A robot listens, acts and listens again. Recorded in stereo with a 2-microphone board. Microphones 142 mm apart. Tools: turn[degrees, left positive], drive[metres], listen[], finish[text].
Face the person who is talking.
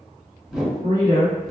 Thought: The woman speaking: about 70° right or 110° right.
Action: turn[-70]
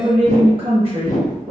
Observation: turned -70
Thought: So it is at 45° right.
Action: turn[-45]
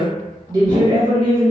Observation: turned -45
Thought: The woman speaking is now 50° right.
Action: turn[-50]
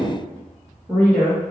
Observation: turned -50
Thought: The woman speaking is now 15° right.
Action: turn[-15]
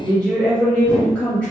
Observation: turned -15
Action: finish[Found it: a woman speaking, straight ahead, 1 to 2 m away.]